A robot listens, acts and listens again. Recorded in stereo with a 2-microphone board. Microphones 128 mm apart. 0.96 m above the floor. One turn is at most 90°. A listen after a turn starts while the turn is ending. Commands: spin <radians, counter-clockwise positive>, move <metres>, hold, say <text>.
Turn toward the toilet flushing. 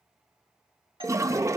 spin -0.44
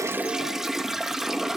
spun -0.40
say Facing the toilet flushing.